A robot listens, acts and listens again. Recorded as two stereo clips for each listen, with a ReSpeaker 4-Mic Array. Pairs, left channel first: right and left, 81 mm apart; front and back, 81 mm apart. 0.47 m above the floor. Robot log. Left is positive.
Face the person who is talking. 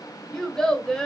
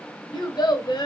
end: Found it: a child speaking, straight ahead.